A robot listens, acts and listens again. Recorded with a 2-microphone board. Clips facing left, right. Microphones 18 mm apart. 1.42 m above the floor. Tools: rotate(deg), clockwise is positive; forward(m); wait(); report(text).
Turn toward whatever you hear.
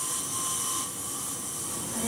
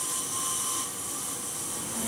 rotate(-30)
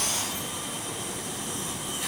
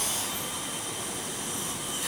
rotate(-155)
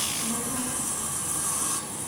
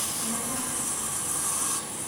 report("Found it: a child speaking, straight ahead, over 4 m away.")